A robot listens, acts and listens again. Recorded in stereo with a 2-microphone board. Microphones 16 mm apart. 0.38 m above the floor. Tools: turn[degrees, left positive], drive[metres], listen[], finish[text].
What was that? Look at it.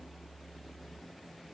Action: listen[]
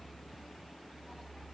Action: listen[]
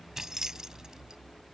Thought: The keys jangling: about 45° right or 135° right.
Action: turn[-45]
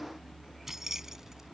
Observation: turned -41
Thought: So it is at 35° right.
Action: turn[-35]
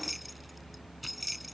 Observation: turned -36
Thought: The keys jangling is now 10° right.
Action: turn[-10]
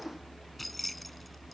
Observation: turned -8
Action: finish[Facing the keys jangling.]